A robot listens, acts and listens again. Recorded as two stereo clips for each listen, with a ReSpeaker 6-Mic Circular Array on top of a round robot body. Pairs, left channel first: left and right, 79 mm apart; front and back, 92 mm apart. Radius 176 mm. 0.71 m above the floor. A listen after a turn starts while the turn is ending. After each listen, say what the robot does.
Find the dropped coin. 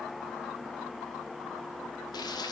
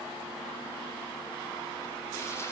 Keep listening.
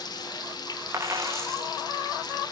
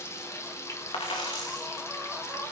Turn 35° right.
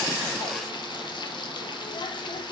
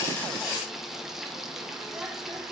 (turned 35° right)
I heard a dropped coin from this way, but can't make it out now.